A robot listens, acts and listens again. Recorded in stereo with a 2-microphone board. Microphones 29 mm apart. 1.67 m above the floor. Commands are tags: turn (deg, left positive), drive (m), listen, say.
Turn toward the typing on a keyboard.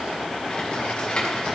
<turn deg="35"/>
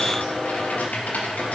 <turn deg="110"/>
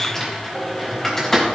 <turn deg="10"/>
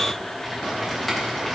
<say>Found it: typing on a keyboard, straight ahead.</say>